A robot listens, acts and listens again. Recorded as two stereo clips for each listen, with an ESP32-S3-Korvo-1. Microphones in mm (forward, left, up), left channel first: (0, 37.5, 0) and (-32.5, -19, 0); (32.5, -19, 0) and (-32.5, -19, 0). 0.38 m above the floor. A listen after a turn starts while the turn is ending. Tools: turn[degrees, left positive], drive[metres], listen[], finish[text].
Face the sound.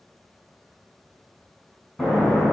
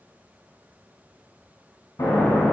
Thought: The explosion: 20° right.
Action: turn[-20]
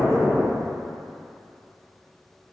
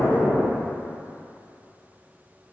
Action: finish[Found it: an explosion, straight ahead.]